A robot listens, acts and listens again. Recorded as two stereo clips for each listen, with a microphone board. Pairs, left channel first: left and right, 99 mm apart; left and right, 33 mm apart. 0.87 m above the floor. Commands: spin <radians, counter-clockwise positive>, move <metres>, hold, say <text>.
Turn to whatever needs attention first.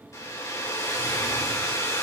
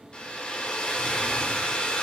hold
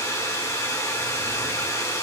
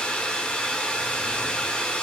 hold
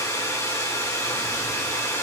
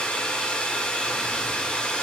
say I can't make out anything urgent to turn to.